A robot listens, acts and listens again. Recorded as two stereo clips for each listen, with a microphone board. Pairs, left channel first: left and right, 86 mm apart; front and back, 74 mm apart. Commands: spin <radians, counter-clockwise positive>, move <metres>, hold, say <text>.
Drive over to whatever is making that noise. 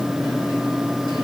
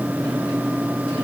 hold
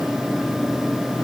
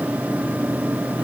hold
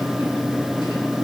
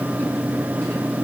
say I can't make out anything to turn to.